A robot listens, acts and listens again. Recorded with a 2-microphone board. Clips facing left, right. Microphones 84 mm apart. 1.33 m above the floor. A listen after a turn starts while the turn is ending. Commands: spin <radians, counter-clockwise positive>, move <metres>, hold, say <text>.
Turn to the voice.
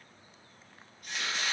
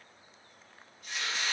hold
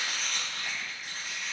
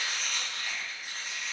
hold
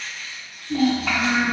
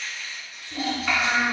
spin 1.31
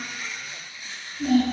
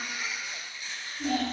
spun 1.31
say Found it: a child speaking, straight ahead, 1 to 2 m away.